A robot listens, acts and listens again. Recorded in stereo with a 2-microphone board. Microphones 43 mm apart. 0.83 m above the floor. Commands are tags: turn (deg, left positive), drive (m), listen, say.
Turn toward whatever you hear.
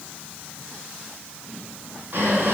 <turn deg="-50"/>
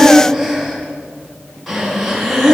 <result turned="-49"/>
<say>Facing the breathing, 2 to 4 m away.</say>